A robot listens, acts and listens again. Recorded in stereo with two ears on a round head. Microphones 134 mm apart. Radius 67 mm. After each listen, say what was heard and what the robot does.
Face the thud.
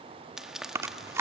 Keep listening.
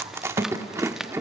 The thud: about 45° right or 135° right. Turn 45° right.
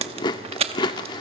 Keep listening.
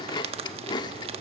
I heard a thud, but can't make it out now. It was about straight ahead or 90° right.